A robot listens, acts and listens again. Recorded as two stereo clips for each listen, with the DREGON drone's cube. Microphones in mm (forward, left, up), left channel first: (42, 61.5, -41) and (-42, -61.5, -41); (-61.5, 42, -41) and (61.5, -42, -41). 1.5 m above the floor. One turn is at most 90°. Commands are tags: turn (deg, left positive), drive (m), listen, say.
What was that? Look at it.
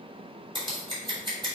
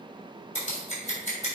<turn deg="90"/>
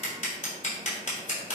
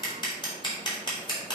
<turn deg="90"/>
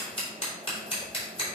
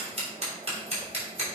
<say>Found it: scissors, straight ahead.</say>